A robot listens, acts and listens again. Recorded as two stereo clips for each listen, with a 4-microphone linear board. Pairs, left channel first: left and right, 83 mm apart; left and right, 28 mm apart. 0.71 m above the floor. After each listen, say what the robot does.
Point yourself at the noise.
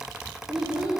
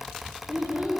Turn 65° right.
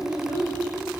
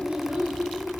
Turn 70° right.
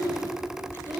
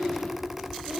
Turn 65° right.
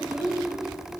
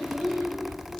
Turn 15° right.
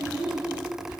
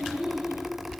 Turn 15° right.
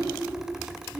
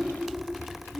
Facing the child speaking.